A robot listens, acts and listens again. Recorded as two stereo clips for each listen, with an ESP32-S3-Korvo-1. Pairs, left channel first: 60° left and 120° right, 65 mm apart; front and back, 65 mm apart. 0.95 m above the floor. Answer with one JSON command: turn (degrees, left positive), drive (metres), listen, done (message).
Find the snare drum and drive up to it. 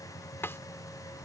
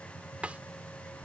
{"turn": 110}
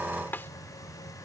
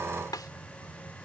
{"drive": 1.0}
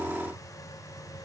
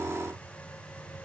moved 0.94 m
{"listen": true}
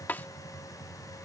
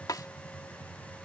{"drive": 1.0}
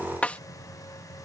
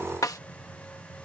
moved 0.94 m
{"drive": 1.0}
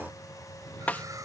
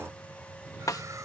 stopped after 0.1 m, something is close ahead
{"done": "Arrived at the snare drum, straight ahead."}